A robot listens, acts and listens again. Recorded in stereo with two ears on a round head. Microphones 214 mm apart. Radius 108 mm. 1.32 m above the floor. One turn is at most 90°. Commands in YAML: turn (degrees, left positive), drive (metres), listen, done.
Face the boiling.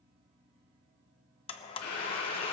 turn: 90
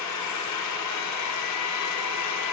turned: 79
turn: 10
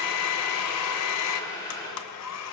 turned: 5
turn: 15
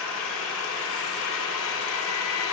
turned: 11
listen: true
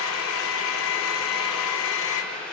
done: "Found it: boiling, straight ahead, over 4 m away."